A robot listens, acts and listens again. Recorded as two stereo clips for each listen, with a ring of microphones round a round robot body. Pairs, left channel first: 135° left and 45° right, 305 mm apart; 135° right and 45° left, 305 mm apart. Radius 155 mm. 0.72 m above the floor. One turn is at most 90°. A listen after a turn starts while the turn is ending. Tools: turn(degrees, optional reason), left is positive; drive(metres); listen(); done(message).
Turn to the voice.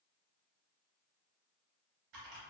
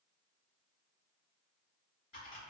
listen()
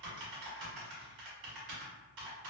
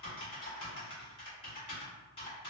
listen()
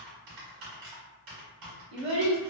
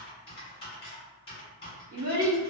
turn(degrees=-20, reason="The child speaking: 20° right.")
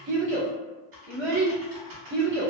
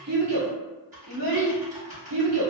turn(degrees=10, reason="The child speaking is now 10° left.")
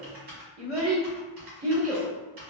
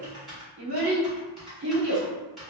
done("Facing the child speaking.")